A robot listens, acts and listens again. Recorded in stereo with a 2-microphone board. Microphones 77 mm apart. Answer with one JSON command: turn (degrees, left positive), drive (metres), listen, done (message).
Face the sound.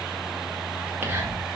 {"turn": -30}
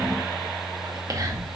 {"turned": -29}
{"turn": -125}
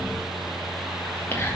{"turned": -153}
{"turn": 30}
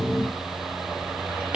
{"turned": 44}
{"turn": -15}
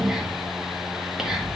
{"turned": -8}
{"done": "Facing the whispering, 2 to 4 m away."}